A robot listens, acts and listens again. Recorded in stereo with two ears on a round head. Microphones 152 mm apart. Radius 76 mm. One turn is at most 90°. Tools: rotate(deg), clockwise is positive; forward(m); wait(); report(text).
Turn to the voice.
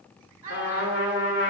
rotate(20)
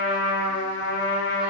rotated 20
wait()
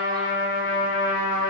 wait()
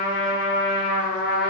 report("I heard a child speaking, but can't make it out now. It was about straight ahead or 140° right.")